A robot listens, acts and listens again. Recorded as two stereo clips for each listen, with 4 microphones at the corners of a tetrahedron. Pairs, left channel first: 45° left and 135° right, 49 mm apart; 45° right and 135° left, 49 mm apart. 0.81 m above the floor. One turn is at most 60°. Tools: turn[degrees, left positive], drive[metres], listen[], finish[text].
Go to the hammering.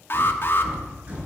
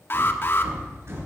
Thought: The hammering: 165° left.
Action: turn[60]
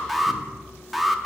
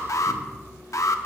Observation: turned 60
Thought: Nothing new. It was at 105° left.
Action: turn[60]
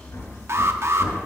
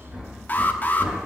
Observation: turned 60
Thought: The hammering is now 65° left.
Action: turn[60]
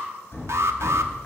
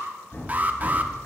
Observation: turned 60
Action: drive[1.0]
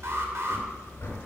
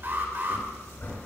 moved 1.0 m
Action: drive[1.0]
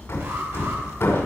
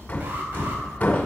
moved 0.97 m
Thought: The hammering is now 10° left.
Action: turn[10]
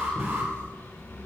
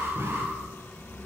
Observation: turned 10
Action: drive[1.0]
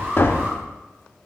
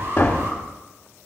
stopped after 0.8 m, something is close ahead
Action: finish[I am next to the hammering.]